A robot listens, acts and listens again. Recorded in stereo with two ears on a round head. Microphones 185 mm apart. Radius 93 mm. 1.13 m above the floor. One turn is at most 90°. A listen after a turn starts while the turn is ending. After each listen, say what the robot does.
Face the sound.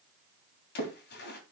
Turn 55° left.
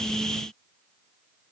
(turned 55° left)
Keep listening.
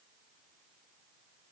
I heard a splash, but can't make it out now. It was about straight ahead or 70° left.